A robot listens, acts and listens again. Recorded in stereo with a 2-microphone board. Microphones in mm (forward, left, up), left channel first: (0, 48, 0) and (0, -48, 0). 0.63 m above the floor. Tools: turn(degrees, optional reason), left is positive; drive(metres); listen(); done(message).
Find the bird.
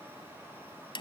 listen()
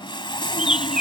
turn(degrees=-30)
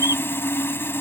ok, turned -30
listen()
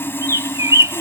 turn(degrees=-140, reason="So it is at 140° right.")
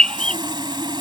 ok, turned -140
turn(degrees=10, reason="The bird is now 10° left.")
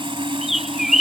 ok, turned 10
done("Found it: a bird, straight ahead.")